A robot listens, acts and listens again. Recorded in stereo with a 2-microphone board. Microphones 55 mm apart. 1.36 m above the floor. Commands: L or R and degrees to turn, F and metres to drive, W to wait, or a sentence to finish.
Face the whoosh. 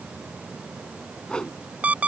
L15
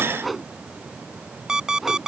Found it: a whoosh, straight ahead.